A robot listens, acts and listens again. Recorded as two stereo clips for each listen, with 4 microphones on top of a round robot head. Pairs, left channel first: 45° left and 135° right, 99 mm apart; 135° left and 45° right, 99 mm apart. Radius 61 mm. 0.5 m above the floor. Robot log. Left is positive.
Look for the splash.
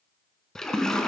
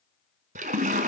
note: The splash: 40° right.
cmd yaw -40
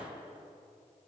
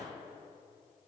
end: I heard a splash from this way, but can't make it out now.